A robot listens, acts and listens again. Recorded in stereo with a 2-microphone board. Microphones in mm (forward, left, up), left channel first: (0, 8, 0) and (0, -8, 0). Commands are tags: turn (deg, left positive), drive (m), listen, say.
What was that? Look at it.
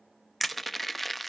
<turn deg="30"/>
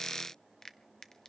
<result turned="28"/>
<listen/>
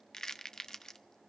<turn deg="140"/>
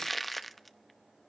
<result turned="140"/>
<say>Facing the crushing, under 1 m away.</say>